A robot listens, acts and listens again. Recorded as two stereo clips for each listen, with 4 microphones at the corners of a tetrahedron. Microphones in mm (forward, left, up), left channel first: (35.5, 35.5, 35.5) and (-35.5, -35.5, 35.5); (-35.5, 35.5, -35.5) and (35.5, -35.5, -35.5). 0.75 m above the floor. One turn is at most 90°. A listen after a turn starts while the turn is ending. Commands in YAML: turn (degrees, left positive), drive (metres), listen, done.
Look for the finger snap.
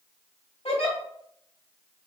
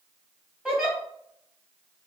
listen: true
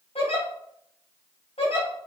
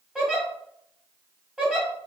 listen: true
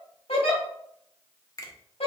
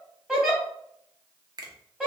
done: "Facing the finger snap."